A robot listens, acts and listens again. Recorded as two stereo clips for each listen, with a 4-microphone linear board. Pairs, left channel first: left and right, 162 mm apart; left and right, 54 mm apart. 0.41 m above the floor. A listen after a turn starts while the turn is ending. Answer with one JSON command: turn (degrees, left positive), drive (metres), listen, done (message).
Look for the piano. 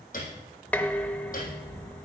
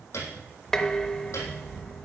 {"turn": 60}
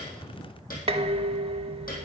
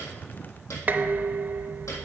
{"turn": 65}
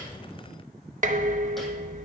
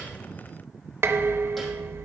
{"listen": true}
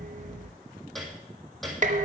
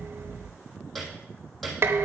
{"done": "Facing the piano, 2 to 4 m away."}